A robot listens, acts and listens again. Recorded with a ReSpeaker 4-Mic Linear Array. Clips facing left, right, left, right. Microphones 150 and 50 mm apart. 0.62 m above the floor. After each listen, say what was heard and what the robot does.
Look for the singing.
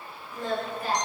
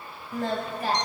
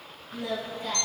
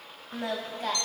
Turn 90° right.
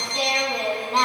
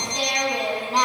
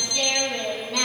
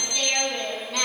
Facing the singing, 2 to 4 m away.